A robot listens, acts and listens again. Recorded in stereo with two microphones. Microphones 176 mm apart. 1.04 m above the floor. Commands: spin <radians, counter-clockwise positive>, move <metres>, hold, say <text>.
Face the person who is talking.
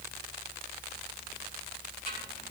hold
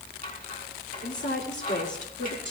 spin 1.57
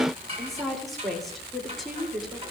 say Found it: a woman speaking, straight ahead.